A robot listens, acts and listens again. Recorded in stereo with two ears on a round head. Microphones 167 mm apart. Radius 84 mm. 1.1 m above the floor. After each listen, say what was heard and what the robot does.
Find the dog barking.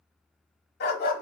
The dog barking: about 50° left or 130° left. Turn 50° left.
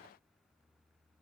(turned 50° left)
Keep listening.
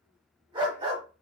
So it is at 30° right. Turn 30° right.
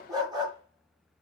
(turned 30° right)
The dog barking is now 25° right. Turn 25° right.
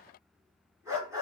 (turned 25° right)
The dog barking is now 15° right. Turn 15° right.
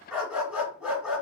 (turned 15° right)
Facing the dog barking.